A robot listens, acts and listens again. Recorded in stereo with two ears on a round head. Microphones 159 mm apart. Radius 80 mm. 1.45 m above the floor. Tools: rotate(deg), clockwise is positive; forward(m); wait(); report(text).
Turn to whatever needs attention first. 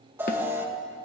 rotate(30)
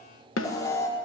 rotate(-20)
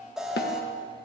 report("Facing the alarm, 2 to 4 m away.")